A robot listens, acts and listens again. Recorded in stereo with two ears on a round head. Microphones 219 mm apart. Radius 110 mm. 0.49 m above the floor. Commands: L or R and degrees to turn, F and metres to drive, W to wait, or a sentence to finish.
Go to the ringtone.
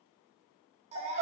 W
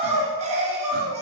W
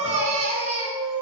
I can't make out a ringtone, only a baby crying and crying.